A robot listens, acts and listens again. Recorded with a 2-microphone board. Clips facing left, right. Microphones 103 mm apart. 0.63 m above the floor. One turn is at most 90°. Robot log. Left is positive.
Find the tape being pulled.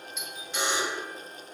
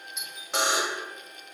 cmd idle
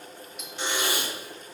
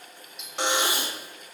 note: The tape being pulled: about 25° right or 155° right.
cmd yaw -25
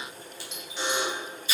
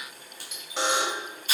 note: So it is at 125° right.
cmd yaw -90
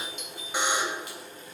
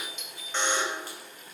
note: Nothing new. It was at 35° right.
cmd yaw -35
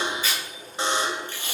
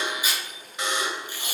note: The tape being pulled is now 15° right.
cmd yaw -15
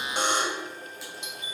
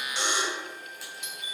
cmd idle
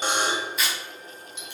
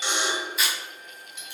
end: Facing the tape being pulled, 2 to 4 m away.